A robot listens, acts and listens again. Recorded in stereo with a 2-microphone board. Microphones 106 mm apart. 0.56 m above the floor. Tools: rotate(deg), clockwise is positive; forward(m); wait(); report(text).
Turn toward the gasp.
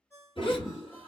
rotate(-60)
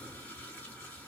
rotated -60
wait()
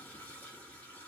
report("I heard a gasp, but can't make it out now. It was about straight ahead or 60° left.")